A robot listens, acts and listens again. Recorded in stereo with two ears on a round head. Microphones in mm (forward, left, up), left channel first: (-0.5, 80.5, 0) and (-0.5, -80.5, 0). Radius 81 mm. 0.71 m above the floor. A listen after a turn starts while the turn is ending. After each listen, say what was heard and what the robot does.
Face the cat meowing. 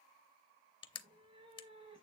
The cat meowing: about 35° right or 145° right. Turn 35° right.
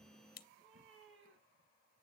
So it is at 105° right. Turn 105° right.
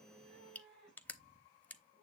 Facing the cat meowing, over 4 m away.